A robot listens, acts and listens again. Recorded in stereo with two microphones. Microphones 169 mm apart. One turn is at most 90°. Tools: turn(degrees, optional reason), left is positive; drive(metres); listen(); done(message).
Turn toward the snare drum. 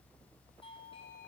listen()
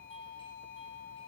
listen()
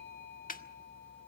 turn(degrees=60, reason="The snare drum: about 60° left or 120° left.")
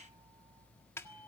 turn(degrees=20, reason="So it is at 20° left.")
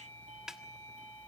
done("Facing the snare drum.")